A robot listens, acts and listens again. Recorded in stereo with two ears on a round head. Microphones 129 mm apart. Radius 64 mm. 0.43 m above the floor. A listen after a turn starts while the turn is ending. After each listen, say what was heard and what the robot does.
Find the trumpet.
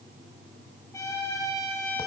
The trumpet: about 20° left or 160° left. Turn 20° left.
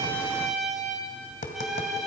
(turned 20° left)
Found it: a trumpet, straight ahead.